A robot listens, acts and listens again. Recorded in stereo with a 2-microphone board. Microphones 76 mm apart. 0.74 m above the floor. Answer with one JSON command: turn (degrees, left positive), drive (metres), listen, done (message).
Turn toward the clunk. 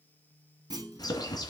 {"turn": -60}
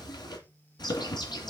{"listen": true}
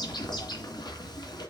{"done": "I heard a clunk, but can't make it out now. It was about straight ahead or 60° right."}